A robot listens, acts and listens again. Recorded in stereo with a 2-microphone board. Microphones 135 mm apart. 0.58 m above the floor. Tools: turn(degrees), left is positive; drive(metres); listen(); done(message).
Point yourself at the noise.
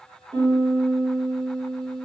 turn(degrees=-35)
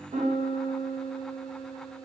turn(degrees=-110)
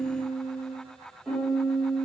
done("Facing the piano, 1 to 2 m away.")